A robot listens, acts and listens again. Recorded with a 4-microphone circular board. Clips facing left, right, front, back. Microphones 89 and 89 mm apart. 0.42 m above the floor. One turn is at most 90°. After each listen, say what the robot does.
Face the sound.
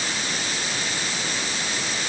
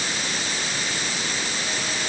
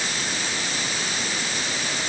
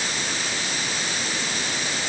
Keep listening.
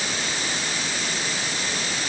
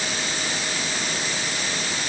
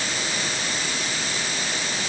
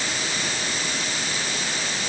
Keep listening.
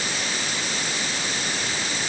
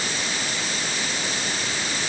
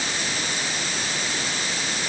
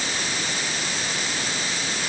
I can't make out anything.